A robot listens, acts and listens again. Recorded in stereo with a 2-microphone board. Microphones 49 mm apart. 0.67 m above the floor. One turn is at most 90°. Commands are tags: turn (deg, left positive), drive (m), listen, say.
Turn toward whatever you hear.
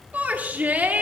<turn deg="-35"/>
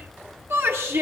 <turn deg="-90"/>
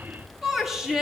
<turn deg="-10"/>
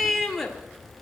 <say>Facing the shout.</say>